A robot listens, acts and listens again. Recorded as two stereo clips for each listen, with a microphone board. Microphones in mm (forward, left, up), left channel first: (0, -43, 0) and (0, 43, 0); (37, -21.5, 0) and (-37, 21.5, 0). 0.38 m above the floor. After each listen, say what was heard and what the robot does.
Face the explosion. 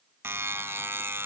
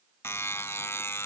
Keep listening.
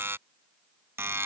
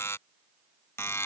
Keep listening.
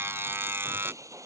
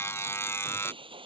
The explosion: 145° left. Turn 145° left.
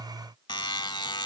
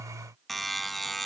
I heard an explosion from this way, but can't make it out now.